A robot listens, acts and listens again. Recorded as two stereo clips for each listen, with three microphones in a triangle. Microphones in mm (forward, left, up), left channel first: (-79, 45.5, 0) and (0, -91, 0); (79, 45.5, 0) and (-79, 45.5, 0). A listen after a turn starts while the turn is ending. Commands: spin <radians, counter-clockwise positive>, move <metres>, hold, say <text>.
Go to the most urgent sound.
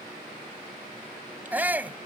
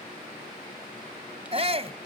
spin -2.44
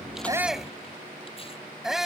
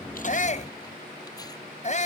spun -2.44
spin 0.44
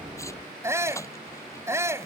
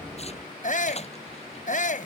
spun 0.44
spin 0.17
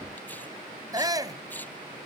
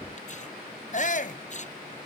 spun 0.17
move 1.0
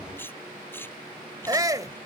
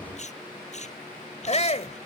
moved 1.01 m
move 1.0
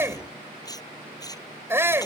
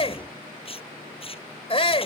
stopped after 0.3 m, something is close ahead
say Arrived at the shout, straight ahead.